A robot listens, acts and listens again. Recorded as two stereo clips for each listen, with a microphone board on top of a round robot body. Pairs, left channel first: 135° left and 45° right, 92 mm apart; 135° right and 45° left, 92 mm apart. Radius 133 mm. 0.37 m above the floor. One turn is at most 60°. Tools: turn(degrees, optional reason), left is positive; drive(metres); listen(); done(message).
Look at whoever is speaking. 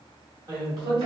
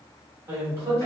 turn(degrees=-10, reason="The man speaking: 10° right.")
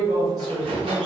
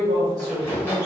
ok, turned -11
done("Found it: a man speaking, straight ahead.")